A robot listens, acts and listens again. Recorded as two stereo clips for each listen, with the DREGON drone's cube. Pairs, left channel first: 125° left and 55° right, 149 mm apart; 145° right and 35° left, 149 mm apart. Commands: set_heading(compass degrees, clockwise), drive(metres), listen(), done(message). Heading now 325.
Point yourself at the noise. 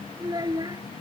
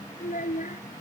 set_heading(85)
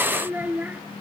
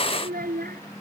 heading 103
set_heading(78)
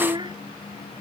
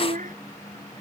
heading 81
done("Found it: a child speaking, straight ahead.")